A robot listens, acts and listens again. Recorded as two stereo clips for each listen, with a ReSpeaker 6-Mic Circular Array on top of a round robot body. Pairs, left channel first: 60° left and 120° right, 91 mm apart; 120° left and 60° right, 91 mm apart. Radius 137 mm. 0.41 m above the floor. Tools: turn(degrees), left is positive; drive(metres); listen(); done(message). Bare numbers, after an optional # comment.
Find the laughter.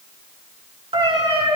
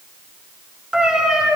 listen()
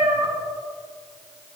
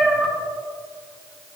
listen()
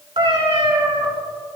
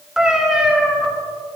done("I can't make out laughter to turn to.")